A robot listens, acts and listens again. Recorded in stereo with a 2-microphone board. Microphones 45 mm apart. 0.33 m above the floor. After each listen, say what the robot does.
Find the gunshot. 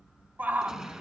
Turn 15° right.
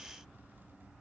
Keep listening.
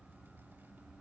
I heard a gunshot, but can't make it out now. It was about straight ahead or 150° right.